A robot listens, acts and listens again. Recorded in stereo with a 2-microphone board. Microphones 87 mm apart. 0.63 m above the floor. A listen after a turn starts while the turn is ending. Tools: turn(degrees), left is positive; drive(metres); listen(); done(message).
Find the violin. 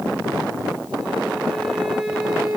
turn(degrees=-30)
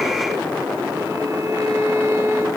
turn(degrees=-140)
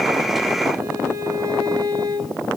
turn(degrees=-40)
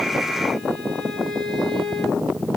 turn(degrees=10)
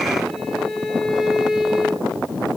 done("Facing the violin, 2 to 4 m away.")